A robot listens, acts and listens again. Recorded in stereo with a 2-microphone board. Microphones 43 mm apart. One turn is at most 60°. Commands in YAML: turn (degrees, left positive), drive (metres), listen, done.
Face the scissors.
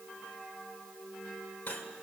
listen: true
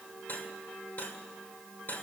listen: true
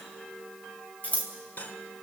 turn: 35
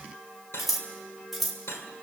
done: "Found it: scissors, straight ahead."